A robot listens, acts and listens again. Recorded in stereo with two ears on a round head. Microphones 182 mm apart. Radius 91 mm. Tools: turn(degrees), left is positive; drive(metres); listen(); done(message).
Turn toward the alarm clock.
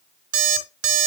turn(degrees=-90)
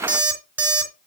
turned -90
turn(degrees=-10)
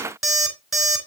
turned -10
done("Found it: an alarm clock, straight ahead, 2 to 4 m away.")